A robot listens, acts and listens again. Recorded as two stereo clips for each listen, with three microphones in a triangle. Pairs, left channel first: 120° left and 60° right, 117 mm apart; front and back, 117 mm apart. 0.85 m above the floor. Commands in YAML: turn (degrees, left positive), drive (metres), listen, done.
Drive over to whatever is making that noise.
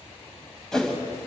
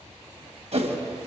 turn: -155
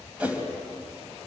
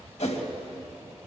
turn: 15
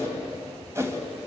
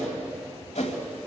drive: 1.0
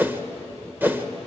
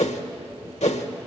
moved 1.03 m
turn: 10
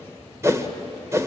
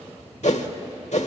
drive: 1.0
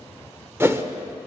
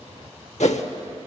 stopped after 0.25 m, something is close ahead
turn: 10
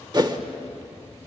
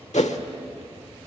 done: "I am next to the whoosh."